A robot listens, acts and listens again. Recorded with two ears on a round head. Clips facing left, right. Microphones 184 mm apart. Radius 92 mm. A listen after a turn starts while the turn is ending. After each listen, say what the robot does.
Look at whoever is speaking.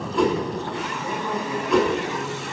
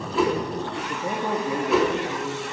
Turn 30° right.
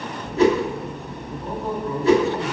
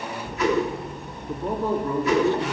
Turn 125° right.
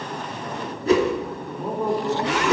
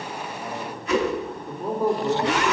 Found it: a man speaking, straight ahead.